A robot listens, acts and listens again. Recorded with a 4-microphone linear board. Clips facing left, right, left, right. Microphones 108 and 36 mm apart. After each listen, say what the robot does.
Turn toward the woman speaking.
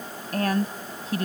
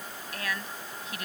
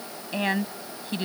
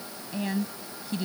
Turn 35° left.
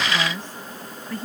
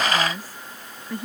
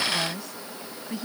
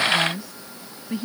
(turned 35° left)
Turn 15° right.
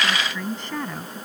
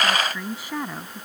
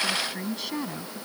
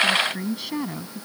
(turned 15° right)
Turn 10° right.
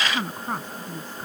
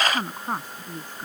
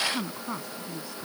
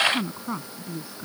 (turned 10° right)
Turn 15° right.
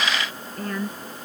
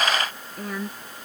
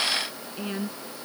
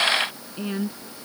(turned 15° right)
Found it: a woman speaking, straight ahead.